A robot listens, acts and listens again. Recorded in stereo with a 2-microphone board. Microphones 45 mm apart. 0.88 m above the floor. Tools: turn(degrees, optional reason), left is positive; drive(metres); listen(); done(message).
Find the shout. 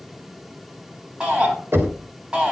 turn(degrees=-20, reason="The shout: about 20° right or 160° right.")
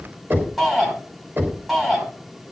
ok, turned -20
done("Found it: a shout, straight ahead, over 4 m away.")